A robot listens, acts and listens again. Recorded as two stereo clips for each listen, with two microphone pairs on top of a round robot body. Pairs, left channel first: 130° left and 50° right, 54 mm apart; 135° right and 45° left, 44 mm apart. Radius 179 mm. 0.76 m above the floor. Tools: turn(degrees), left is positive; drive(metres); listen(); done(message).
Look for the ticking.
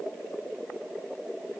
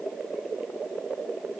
listen()
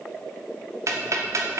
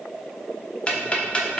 turn(degrees=-75)
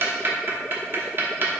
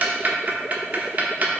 done("Found it: ticking, straight ahead, 1 to 2 m away.")